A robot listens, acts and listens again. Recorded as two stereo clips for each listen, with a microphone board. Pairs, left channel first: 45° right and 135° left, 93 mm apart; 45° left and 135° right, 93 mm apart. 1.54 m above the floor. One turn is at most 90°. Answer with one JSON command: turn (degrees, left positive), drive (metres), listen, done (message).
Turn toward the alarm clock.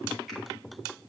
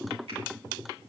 {"listen": true}
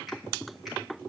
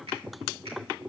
{"listen": true}
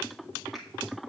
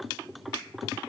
{"done": "I can't make out an alarm clock."}